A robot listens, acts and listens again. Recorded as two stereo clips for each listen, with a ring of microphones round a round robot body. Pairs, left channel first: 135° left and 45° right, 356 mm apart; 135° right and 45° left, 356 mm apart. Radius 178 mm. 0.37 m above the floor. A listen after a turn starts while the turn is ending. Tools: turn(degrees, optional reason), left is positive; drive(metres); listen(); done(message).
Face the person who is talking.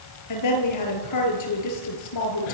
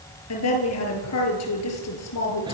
turn(degrees=175, reason="The woman speaking: 175° left.")
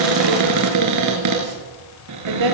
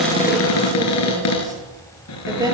turn(degrees=-35, reason="The woman speaking is now 35° right.")
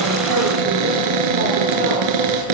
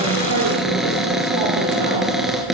listen()
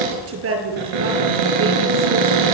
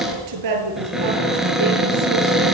turn(degrees=10, reason="The woman speaking is now 10° left.")
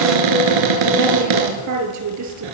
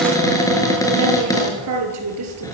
done("Found it: a woman speaking, straight ahead, over 4 m away.")